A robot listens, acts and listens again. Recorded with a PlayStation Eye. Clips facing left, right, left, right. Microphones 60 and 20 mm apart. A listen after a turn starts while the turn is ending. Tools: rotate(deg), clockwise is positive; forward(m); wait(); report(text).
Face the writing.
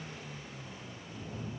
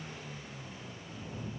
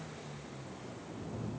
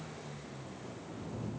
wait()
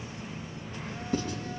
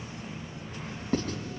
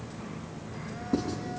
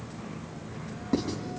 rotate(45)
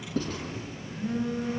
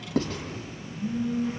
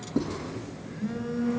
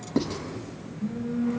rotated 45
rotate(90)
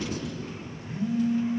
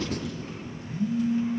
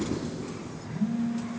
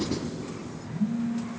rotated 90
wait()
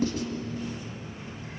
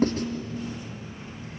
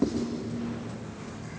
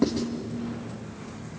rotate(45)
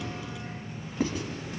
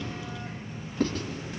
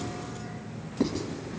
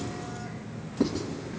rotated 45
rotate(-15)
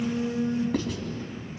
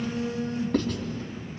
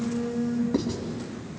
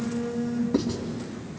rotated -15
report("Found it: writing, straight ahead.")